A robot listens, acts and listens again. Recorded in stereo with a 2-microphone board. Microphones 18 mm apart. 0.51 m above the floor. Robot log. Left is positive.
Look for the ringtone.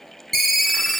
cmd yaw +30
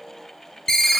note: So it is at 145° left.
cmd yaw +145
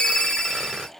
note: The ringtone is now 50° left.
cmd yaw +50
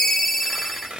note: The ringtone is now 20° left.
cmd yaw +20
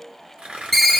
end: Found it: a ringtone, straight ahead.